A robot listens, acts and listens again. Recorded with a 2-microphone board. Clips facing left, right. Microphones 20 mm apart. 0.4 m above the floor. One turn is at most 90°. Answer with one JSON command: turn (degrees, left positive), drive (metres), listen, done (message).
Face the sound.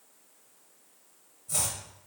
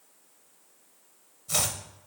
{"turn": -55}
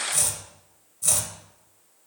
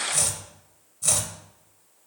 {"turn": -10}
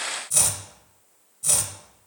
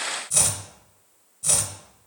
{"done": "Found it: chopping, straight ahead."}